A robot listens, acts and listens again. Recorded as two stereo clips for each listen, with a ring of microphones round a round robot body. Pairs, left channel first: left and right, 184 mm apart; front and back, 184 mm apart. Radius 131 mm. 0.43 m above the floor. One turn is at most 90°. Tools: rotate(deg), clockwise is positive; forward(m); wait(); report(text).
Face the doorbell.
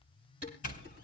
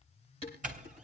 rotate(-90)
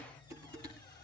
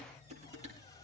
rotate(-55)
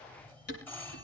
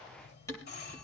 rotate(-10)
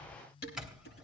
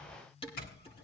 report("Facing the doorbell, 2 to 4 m away.")